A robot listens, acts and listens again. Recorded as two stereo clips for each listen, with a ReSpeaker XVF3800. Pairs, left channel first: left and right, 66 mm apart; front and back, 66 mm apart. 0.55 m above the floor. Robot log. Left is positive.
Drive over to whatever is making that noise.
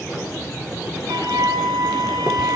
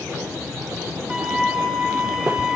note: The flute: 100° right.
cmd yaw -100
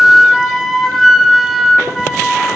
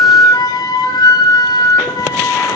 cmd fwd 1.0
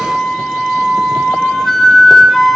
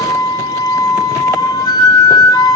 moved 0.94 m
cmd fwd 1.0
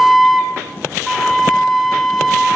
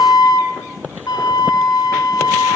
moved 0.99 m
cmd fwd 1.0
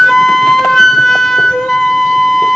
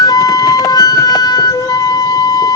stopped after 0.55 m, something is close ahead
end: I am next to the flute.